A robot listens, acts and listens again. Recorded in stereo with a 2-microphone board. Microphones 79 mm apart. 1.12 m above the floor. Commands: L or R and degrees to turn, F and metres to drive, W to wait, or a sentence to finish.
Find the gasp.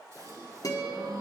R45
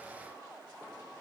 W
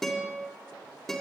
I heard a gasp, but can't make it out now. It was about straight ahead or 90° right.